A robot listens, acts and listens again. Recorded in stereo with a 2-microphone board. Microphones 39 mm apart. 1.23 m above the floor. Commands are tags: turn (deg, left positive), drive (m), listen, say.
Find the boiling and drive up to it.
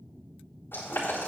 <turn deg="75"/>
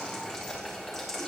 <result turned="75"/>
<drive m="1.0"/>
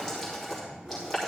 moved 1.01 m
<turn deg="10"/>
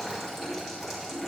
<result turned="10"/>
<drive m="1.0"/>
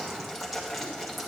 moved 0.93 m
<drive m="1.0"/>
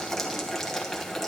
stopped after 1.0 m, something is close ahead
<turn deg="10"/>
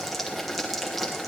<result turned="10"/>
<say>Arrived at the boiling, straight ahead.</say>